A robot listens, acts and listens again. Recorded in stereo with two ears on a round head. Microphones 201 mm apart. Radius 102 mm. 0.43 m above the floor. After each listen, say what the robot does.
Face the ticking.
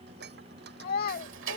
Turn 60° right.
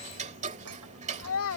Turn 35° right.
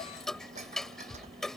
Facing the ticking.